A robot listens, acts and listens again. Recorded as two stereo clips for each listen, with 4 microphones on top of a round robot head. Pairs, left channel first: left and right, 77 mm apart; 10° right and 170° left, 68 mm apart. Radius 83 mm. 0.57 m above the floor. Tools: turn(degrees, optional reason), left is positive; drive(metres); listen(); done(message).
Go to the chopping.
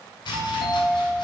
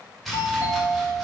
turn(degrees=80, reason="The chopping: 80° left.")
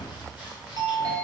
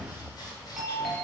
listen()
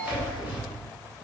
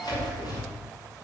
turn(degrees=-20, reason="The chopping is now 20° right.")
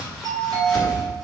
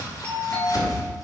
drive(metres=1.0)
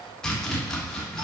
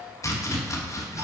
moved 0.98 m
turn(degrees=10, reason="The chopping is now 10° left.")
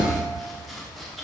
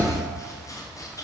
drive(metres=1.0)
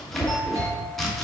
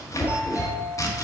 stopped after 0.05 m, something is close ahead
done("Arrived at the chopping, straight ahead.")